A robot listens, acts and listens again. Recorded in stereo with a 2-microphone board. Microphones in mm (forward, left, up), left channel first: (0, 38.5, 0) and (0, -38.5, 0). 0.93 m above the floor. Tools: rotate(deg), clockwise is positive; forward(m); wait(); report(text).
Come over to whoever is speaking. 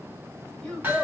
rotate(-30)
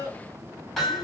rotate(-140)
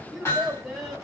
forward(1.0)
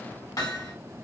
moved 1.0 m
wait()
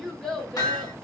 forward(1.0)
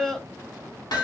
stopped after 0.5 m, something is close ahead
rotate(-10)
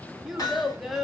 report("I am next to the child speaking.")